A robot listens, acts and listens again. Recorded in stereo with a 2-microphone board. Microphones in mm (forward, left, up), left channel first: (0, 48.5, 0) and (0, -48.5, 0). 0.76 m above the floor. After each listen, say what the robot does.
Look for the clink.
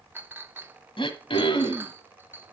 Turn 20° right.
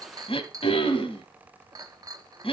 Turn 140° right.
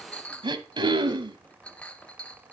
Turn 15° left.
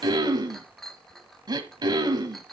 Facing the clink.